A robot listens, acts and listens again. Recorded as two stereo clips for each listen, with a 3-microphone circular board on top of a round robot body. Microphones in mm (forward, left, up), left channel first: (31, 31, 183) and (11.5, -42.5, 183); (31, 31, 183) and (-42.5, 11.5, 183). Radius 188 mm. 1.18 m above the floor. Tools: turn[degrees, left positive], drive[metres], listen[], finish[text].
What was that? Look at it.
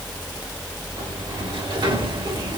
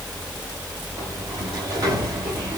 Thought: The sliding door: 125° right.
Action: turn[-125]
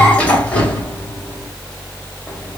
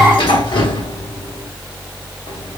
Action: finish[Facing the sliding door.]